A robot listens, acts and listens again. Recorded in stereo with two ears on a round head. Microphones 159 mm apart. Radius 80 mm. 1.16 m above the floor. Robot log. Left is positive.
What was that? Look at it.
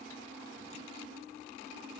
cmd idle
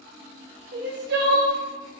note: The crying: about 65° right or 115° right.
cmd yaw -65
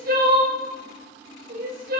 note: So it is at 50° right.
cmd yaw -50
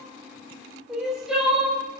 end: Facing the crying, 1 to 2 m away.